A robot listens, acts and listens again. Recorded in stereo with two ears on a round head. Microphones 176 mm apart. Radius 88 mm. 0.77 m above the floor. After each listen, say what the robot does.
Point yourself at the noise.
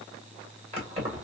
Turn 35° right.
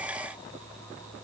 Keep listening.
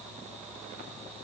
Keep listening.
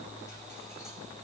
I heard keys jangling, but can't make it out now. It was about straight ahead or 110° right.